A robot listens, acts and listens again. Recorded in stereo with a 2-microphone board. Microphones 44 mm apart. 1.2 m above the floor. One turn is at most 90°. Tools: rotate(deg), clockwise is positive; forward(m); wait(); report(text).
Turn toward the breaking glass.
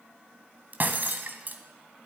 rotate(45)
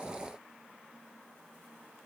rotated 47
wait()
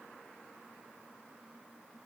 report("I heard breaking glass, but can't make it out now. It was about straight ahead or 90° right.")